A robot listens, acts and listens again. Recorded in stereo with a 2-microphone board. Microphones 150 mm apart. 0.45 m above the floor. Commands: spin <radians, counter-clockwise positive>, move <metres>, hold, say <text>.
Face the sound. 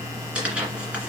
spin -0.52
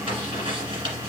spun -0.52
spin -2.53
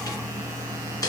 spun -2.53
spin 0.44
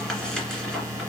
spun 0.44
say Facing the tearing paper.